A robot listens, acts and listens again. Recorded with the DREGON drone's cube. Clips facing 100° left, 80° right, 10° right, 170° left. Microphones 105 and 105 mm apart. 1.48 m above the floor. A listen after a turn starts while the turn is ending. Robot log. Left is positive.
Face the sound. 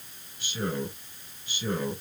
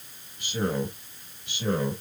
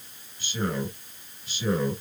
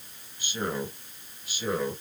note: The man speaking: 105° right.
cmd yaw -105
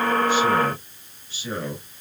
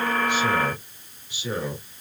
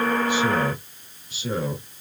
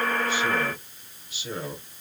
end: Found it: a man speaking, straight ahead.